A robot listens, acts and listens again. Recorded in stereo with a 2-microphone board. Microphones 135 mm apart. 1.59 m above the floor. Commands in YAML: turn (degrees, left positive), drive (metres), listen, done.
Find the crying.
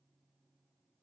listen: true
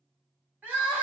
turn: -30
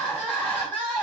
turn: 15
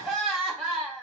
done: "Facing the crying, 1 to 2 m away."